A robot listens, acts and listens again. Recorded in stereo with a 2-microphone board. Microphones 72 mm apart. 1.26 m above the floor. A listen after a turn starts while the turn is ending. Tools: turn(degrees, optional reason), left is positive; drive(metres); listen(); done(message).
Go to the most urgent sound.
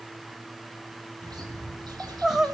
turn(degrees=-30)
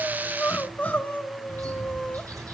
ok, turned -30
turn(degrees=25, reason="So it is at 25° left.")
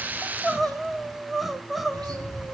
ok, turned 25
drive(metres=1.0)
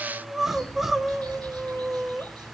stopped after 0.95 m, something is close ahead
done("Arrived at the crying, straight ahead.")